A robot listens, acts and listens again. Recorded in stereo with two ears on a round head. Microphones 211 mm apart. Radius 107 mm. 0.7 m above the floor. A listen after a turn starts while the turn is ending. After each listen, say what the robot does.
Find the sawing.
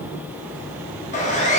Turn 30° left.
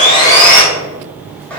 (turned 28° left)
Found it: sawing, straight ahead, under 1 m away.